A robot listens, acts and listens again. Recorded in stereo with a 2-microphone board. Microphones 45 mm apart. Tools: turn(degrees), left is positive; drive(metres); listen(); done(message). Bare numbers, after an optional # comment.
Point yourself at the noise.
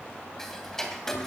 turn(30)
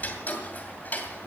# So it is at 140° left.
turn(140)
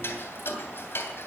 # The ticking is now 60° left.
turn(60)
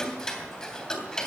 # The ticking is now 15° left.
turn(15)
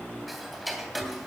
done("Found it: ticking, straight ahead, 2 to 4 m away.")